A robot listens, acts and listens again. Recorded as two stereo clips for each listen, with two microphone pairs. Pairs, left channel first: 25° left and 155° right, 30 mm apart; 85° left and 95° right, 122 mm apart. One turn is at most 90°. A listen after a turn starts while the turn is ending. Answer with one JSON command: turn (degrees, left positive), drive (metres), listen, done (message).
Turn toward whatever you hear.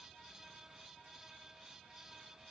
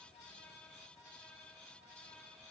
{"listen": true}
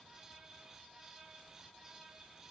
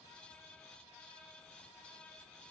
{"listen": true}
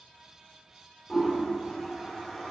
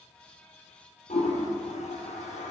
{"turn": 90}
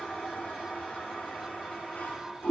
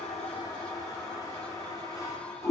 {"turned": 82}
{"turn": 25}
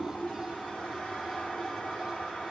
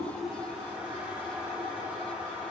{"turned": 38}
{"turn": -15}
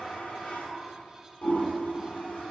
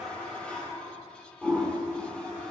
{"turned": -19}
{"done": "Found it: a toilet flushing, straight ahead, 1 to 2 m away."}